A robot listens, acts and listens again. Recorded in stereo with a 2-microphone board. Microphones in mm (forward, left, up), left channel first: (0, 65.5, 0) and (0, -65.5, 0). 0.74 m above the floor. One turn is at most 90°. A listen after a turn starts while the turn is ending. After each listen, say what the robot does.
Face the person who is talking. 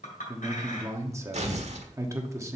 Turn 20° right.
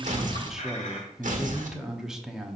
Facing the man speaking.